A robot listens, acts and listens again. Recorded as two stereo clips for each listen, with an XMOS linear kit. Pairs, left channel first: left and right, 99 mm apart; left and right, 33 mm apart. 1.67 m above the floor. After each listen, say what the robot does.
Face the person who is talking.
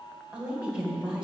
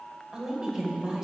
Turn 30° right.
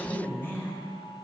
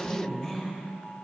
Turn 20° left.
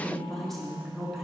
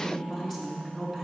Found it: a woman speaking, straight ahead, 2 to 4 m away.